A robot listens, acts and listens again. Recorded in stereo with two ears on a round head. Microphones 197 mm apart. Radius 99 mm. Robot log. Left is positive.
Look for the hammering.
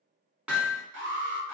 cmd yaw -30
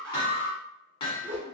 note: So it is at 20° left.
cmd yaw +20
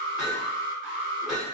end: Found it: hammering, straight ahead, 1 to 2 m away.